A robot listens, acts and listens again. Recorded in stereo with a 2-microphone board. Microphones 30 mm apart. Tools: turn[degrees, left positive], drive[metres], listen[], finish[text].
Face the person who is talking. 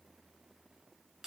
Action: listen[]
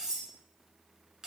Action: listen[]
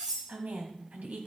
Thought: The woman speaking: about 65° right or 115° right.
Action: turn[-65]
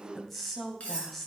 Action: finish[Facing the woman speaking, 2 to 4 m away.]